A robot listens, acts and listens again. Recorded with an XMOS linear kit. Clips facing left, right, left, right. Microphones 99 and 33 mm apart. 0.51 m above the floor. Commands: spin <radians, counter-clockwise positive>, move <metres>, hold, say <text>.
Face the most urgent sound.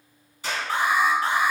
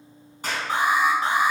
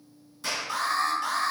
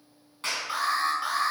spin -0.35
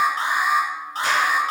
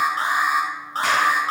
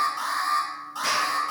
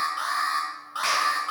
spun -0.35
spin -2.36
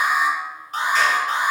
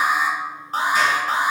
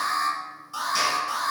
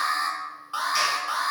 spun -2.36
spin -0.70
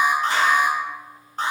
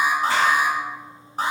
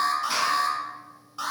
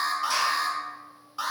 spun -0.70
spin -0.17
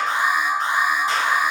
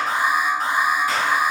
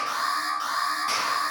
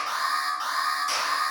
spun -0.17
say Facing the alarm.